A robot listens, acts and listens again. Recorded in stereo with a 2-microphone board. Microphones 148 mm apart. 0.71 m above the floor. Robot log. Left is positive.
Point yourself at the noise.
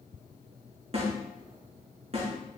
note: The snare drum: about 45° right or 135° right.
cmd yaw -45
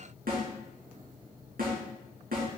note: So it is at 90° right.
cmd yaw -90
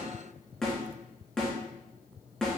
end: Found it: a snare drum, straight ahead.